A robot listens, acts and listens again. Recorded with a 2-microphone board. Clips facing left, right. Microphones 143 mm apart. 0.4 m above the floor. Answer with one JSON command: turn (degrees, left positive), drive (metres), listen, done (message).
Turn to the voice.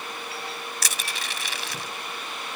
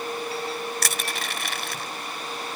{"listen": true}
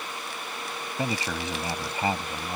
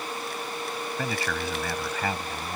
{"turn": 20}
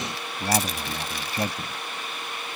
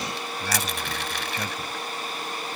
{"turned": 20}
{"turn": 140}
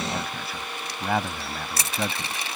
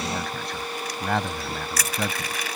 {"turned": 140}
{"done": "Facing the man speaking."}